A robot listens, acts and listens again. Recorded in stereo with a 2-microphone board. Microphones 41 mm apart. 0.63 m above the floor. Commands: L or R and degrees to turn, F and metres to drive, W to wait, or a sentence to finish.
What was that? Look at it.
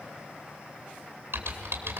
R75
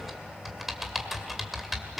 Facing the typing on a keyboard.